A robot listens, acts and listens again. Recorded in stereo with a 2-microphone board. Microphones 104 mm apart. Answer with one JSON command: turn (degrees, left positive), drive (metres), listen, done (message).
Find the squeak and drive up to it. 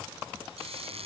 {"turn": -90}
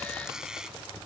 {"drive": 1.0}
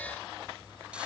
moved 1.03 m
{"listen": true}
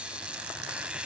{"turn": -10}
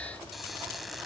{"listen": true}
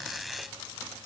{"drive": 1.0}
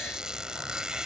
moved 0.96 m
{"drive": 1.0}
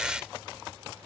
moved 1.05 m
{"turn": -10}
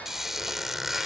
{"drive": 1.0}
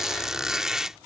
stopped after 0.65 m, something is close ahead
{"done": "Arrived at the squeak, straight ahead."}